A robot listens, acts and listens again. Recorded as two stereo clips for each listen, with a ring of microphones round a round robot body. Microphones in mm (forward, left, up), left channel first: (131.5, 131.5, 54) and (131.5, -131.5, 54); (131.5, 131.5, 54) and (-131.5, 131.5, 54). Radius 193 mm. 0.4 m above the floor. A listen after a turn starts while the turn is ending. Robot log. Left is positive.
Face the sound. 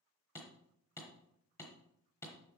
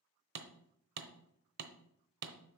note: The hammering: 170° left.
cmd yaw +170
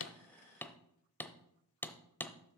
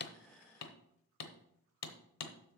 end: Facing the hammering.